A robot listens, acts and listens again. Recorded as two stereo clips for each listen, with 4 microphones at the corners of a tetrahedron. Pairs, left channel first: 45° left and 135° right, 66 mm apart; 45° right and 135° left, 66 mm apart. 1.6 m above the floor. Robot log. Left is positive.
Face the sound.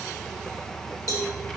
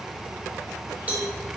note: The cowbell: 70° left.
cmd yaw +70
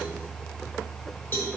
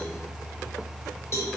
end: Found it: a cowbell, straight ahead.